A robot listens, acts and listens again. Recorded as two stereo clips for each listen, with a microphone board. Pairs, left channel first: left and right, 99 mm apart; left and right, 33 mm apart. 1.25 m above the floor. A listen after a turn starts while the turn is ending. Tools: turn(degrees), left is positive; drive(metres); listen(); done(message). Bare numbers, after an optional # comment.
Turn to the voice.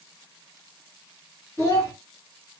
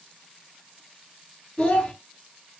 # The child speaking: about 25° left or 155° left.
turn(25)
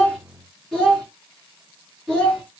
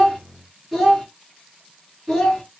done("Facing the child speaking.")